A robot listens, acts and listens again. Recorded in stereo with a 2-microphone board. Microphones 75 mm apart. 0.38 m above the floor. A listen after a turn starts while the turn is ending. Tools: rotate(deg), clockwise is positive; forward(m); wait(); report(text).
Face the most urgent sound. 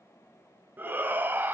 rotate(25)
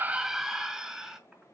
report("Found it: a shout, straight ahead, 1 to 2 m away.")